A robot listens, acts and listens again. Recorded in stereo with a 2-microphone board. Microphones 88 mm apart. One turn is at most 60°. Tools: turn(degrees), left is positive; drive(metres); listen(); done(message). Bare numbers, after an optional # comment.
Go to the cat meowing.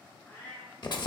# The cat meowing: about 20° left or 160° left.
turn(20)
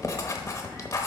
listen()
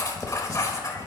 listen()
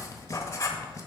done("I heard a cat meowing, but can't make it out now. It was about straight ahead or 140° left. I did not reach it.")